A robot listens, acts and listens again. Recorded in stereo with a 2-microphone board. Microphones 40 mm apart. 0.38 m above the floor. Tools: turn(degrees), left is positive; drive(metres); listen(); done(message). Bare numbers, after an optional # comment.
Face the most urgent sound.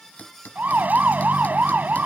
# The siren: about 50° right or 130° right.
turn(-50)
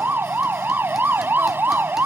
# So it is at 75° right.
turn(-75)
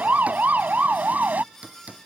# The siren is now 50° right.
turn(-50)
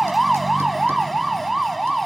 done("Facing the siren.")